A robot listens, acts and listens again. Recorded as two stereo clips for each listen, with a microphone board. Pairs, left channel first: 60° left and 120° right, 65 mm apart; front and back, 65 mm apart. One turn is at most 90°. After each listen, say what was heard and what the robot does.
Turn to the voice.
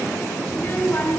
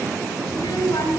Found it: a child speaking, straight ahead, over 4 m away.